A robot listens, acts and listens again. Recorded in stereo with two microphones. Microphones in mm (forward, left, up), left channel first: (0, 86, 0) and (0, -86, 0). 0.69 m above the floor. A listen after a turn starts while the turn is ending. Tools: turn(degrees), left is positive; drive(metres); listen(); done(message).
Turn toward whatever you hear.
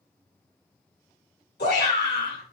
turn(degrees=75)
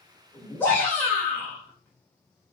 turn(degrees=10)
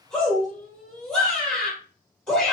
done("Facing the shout, 2 to 4 m away.")